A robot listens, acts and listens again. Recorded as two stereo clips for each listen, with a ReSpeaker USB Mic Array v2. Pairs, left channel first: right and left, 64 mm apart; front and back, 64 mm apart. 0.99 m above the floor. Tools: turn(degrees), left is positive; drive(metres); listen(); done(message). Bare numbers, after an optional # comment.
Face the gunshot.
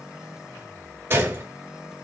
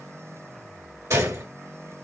# The gunshot: 145° left.
turn(145)
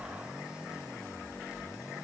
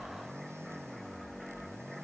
done("I heard a gunshot from this way, but can't make it out now.")